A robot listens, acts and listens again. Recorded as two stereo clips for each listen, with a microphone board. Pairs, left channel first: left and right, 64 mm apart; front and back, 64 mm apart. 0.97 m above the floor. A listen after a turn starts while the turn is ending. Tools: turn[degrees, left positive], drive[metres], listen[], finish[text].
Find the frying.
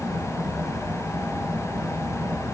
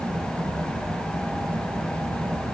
Action: listen[]
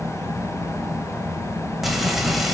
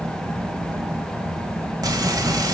Thought: The frying: straight behind.
Action: turn[180]
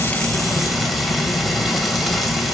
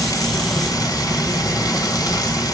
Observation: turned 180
Action: finish[Facing the frying, 2 to 4 m away.]